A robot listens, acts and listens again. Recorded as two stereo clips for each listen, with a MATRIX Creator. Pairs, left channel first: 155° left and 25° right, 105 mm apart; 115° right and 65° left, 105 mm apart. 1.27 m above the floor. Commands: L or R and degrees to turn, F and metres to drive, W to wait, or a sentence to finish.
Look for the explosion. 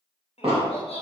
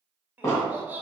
R50
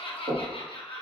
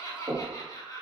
I heard an explosion from this way, but can't make it out now.